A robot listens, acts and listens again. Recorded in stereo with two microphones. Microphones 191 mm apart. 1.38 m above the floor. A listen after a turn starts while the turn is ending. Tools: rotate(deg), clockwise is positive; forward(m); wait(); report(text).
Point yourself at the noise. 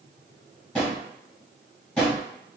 rotate(-30)
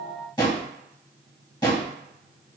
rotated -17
rotate(-160)
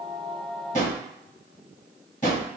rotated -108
rotate(-50)
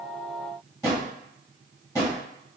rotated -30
rotate(-20)
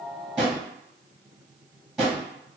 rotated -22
report("Facing the drawer.")